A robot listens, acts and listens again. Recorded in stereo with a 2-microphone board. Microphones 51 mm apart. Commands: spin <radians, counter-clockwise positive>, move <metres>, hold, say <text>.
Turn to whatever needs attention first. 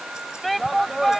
spin 0.52
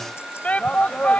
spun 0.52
spin 2.62
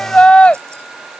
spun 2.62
spin 0.44
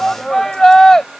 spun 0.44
spin 0.17
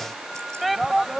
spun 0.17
say Found it: a shout, straight ahead.